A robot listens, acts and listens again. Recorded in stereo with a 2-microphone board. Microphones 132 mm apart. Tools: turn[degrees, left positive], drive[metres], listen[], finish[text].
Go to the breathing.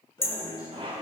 Thought: The breathing: about 30° left or 150° left.
Action: turn[30]
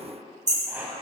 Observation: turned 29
Action: listen[]
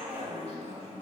Thought: So it is at 110° left.
Action: turn[110]
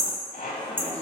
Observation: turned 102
Thought: Nothing new. It was at 10° left.
Action: turn[10]
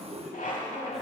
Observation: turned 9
Action: drive[1.0]
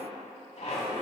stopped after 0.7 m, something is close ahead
Action: listen[]
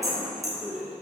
Action: finish[Arrived at the breathing, straight ahead.]